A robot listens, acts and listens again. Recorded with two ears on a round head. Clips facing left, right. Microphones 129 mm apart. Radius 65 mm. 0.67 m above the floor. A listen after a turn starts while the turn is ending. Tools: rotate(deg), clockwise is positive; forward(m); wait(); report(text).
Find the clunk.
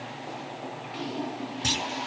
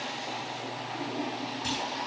rotate(-65)
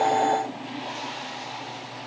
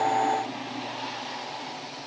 wait()
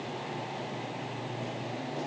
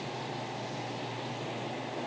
report("I heard a clunk, but can't make it out now. It was about straight ahead or 50° left.")